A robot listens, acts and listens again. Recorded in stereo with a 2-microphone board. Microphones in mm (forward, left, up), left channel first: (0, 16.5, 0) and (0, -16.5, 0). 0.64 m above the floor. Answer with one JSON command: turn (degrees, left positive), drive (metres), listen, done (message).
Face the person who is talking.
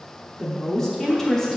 {"turn": 30}
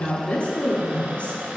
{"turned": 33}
{"turn": 130}
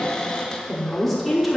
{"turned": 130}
{"done": "Found it: a woman speaking, straight ahead."}